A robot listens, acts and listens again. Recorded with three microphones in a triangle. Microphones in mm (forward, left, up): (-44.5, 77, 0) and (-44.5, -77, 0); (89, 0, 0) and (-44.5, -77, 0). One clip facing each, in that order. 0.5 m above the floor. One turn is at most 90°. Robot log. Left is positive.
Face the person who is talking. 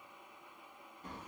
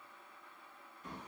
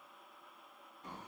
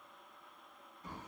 cmd idle
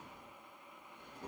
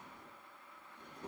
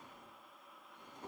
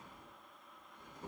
cmd idle
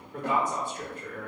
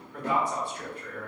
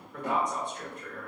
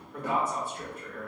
note: The man speaking: 125° left.
cmd yaw +90
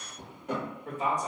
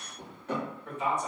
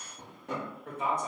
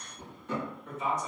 note: The man speaking is now 45° left.
cmd yaw +45
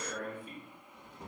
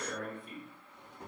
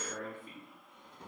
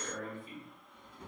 end: Found it: a man speaking, straight ahead, 1 to 2 m away.